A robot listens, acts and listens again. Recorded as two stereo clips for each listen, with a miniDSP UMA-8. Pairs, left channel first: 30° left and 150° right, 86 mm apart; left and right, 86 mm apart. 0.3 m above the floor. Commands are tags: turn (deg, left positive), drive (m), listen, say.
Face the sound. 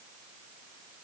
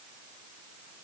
<listen/>
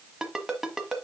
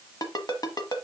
<turn deg="125"/>
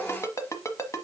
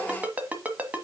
<turn deg="-20"/>
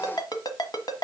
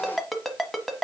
<say>Found it: a ringtone, straight ahead, 1 to 2 m away.</say>